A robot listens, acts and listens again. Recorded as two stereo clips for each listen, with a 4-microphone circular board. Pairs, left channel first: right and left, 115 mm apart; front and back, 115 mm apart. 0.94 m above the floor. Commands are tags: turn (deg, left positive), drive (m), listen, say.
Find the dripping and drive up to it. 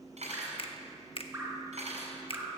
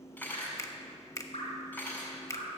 <turn deg="25"/>
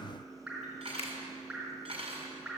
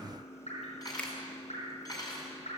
<turn deg="10"/>
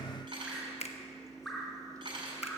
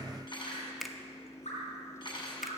<drive m="1.0"/>
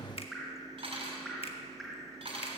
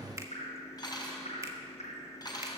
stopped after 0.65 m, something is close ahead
<say>Blocked. The dripping is further on, straight ahead.</say>